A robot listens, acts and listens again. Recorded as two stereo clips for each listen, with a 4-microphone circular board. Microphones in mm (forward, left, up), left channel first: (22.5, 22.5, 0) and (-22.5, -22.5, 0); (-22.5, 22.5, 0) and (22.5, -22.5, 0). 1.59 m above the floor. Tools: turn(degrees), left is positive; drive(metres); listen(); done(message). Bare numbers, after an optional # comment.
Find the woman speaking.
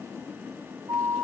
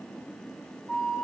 listen()
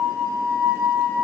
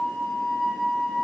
listen()
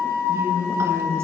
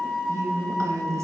# The woman speaking: 85° right.
turn(-85)
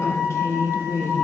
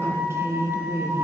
done("Found it: a woman speaking, straight ahead.")